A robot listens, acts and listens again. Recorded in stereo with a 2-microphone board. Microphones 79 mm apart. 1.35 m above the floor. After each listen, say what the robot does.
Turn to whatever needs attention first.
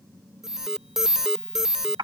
Turn 30° right.
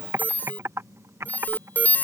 Turn 25° left.
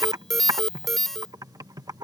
Found it: an alarm, straight ahead.